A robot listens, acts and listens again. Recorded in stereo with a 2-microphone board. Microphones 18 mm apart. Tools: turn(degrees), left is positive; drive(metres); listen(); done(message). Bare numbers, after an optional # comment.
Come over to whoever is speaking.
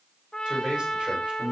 turn(-90)
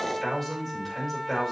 # So it is at 10° left.
turn(10)
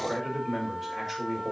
drive(1.0)
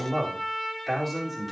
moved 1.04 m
drive(1.0)
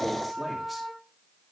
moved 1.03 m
listen()
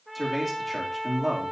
drive(1.0)
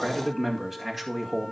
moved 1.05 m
# The man speaking is now 10° right.
turn(-10)
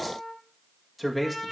drive(1.0)
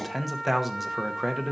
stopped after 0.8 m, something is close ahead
# The man speaking is now 10° right.
turn(-10)
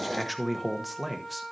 done("Arrived at the man speaking, straight ahead.")